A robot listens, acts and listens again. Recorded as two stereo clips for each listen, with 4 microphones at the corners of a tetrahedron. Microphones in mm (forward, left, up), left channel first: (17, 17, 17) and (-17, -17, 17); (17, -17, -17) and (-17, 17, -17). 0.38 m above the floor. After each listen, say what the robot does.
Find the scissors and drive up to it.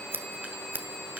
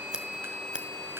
Turn 155° right.
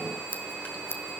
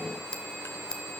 Turn 25° left.
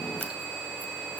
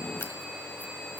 Drive 1.0 m forward.
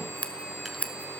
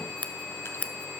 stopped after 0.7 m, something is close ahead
Arrived at the scissors, straight ahead.